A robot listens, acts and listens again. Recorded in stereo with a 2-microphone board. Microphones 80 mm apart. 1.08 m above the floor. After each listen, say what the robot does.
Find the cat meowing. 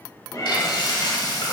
Turn 45° left.
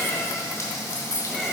Facing the cat meowing, 1 to 2 m away.